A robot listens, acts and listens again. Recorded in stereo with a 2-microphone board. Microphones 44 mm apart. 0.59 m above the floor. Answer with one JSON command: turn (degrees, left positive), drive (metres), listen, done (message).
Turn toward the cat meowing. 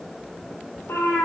{"turn": 70}
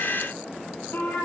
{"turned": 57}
{"turn": 50}
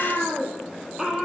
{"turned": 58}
{"turn": -10}
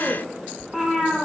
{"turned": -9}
{"done": "Facing the cat meowing, 2 to 4 m away."}